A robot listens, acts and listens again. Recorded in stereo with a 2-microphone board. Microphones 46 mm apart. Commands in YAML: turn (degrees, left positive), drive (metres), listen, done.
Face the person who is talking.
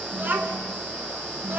turn: -45
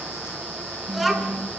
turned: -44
done: "Facing the child speaking."